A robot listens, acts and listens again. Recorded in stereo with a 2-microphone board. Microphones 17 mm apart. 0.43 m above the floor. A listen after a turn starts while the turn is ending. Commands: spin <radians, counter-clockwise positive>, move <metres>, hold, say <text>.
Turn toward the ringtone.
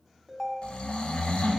spin 0.35
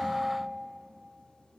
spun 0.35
spin 2.44
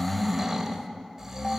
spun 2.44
hold
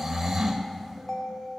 spin 0.52
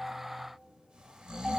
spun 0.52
say Found it: a ringtone, straight ahead.